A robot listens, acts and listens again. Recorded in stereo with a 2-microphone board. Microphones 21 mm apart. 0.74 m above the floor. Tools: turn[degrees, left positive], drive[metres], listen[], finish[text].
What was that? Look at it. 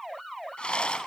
Thought: The rattle: about 55° left or 125° left.
Action: turn[55]
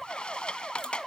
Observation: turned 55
Thought: So it is at 60° left.
Action: turn[60]
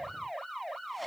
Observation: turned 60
Action: listen[]
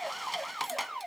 Action: finish[Facing the rattle.]